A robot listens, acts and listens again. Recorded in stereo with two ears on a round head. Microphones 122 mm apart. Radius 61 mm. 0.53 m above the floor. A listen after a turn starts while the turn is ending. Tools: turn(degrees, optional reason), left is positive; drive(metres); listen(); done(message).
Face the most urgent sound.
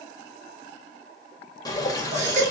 turn(degrees=-55, reason="The baby crying: about 55° right or 125° right.")
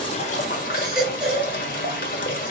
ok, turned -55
done("Found it: a baby crying, straight ahead, 2 to 4 m away.")